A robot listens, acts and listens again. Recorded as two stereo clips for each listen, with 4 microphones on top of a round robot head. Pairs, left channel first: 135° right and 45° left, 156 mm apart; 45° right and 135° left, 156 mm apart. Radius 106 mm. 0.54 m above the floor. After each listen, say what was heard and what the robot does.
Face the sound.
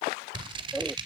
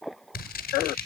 The scissors: 15° right. Turn 15° right.
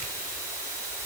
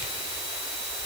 Keep listening.
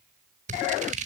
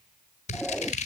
Found it: scissors, straight ahead, 1 to 2 m away.